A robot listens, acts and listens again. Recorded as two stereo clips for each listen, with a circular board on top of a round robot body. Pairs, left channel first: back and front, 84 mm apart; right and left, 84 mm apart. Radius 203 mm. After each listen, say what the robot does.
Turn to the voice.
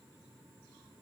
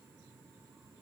Keep listening.
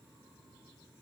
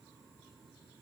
Keep listening.
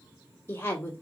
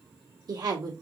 Turn 120° left.
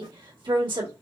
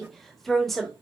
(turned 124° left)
Facing the woman speaking.